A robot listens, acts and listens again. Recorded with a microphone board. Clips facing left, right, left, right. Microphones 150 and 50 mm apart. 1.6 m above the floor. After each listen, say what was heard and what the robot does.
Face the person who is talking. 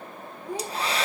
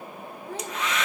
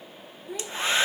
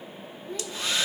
The child speaking: about 15° left or 165° left. Turn 15° left.
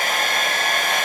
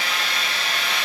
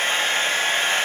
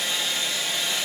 Keep listening.
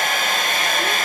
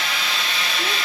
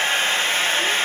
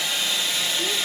Keep listening.
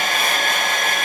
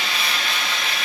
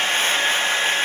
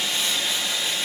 I heard a child speaking, but can't make it out now. It was about straight ahead or 150° left.